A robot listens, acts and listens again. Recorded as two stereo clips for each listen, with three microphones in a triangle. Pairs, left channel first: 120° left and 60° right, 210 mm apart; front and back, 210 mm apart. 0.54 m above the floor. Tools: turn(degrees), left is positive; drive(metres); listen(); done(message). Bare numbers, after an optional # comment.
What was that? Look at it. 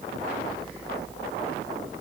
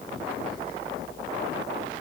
listen()
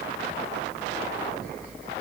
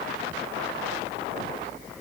listen()
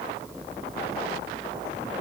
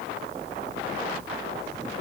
done("I can't make out anything.")